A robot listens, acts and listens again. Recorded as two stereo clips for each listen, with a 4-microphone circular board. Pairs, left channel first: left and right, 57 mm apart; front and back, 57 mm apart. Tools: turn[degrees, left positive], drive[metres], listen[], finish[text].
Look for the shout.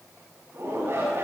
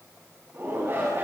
Thought: The shout: 135° right.
Action: turn[-135]
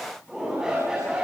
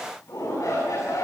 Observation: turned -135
Thought: The shout is now 10° right.
Action: turn[-10]
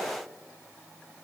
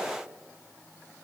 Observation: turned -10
Action: listen[]
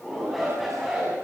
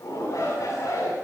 Action: finish[Facing the shout, over 4 m away.]